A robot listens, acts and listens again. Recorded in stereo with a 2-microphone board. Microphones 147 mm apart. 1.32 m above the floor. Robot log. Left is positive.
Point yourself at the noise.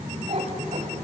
note: The cat meowing: about 50° right or 130° right.
cmd yaw -50
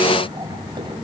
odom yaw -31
note: So it is at 35° right.
cmd yaw -35
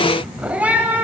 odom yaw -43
note: The cat meowing is now 15° right.
cmd yaw -15
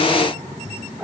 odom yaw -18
note: The cat meowing is now 10° right.
cmd yaw -10
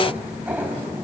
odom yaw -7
note: The cat meowing is now 15° right.
cmd yaw -15
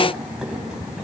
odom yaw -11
cmd idle
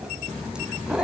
end: Facing the cat meowing.